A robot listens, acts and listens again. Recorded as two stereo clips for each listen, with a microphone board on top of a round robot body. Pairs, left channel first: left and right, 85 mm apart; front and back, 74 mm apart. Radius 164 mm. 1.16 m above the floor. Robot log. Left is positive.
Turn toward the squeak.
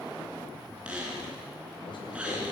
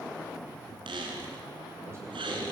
note: The squeak: 170° right.
cmd yaw -170
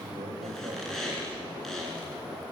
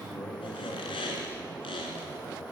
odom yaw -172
end: Facing the squeak, 2 to 4 m away.